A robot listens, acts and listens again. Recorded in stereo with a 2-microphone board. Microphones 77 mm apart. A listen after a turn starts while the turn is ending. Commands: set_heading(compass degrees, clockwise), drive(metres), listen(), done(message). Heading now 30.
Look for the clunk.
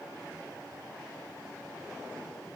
listen()
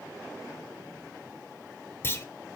set_heading(0)
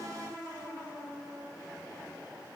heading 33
listen()
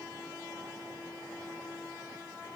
done("I heard a clunk, but can't make it out now. It was about 30° left or 155° left.")